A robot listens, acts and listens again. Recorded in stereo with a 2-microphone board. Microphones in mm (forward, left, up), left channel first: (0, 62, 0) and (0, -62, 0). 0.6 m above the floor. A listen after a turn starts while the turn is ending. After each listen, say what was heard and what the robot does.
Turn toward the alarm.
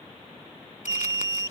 The alarm: about 35° left or 145° left. Turn 35° left.
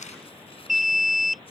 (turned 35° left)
Facing the alarm.